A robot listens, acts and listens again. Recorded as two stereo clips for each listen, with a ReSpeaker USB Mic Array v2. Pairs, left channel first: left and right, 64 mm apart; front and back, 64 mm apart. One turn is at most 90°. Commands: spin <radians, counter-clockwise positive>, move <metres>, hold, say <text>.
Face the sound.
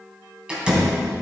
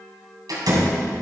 spin -1.57
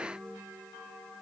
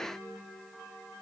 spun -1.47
spin -1.40
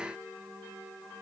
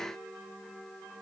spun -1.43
say I heard a door slam from this way, but can't make it out now.